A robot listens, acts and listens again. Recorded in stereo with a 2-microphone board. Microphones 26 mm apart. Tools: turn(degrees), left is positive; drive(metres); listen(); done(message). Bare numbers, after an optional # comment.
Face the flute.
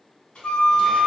# The flute: about 55° left or 125° left.
turn(55)
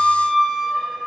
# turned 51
done("Facing the flute.")